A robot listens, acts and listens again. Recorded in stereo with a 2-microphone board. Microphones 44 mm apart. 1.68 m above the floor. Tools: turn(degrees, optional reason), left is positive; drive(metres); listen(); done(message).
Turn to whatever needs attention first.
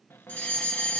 turn(degrees=35, reason="The fire alarm: about 35° left or 145° left.")
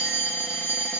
turn(degrees=110, reason="So it is at 110° left.")
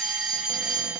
done("Found it: a fire alarm, straight ahead.")